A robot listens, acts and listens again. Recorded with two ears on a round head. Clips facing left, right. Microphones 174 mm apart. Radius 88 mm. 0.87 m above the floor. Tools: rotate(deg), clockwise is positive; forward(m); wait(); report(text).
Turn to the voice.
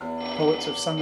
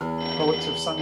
rotate(-15)
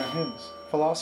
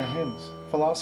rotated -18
report("Facing the man speaking.")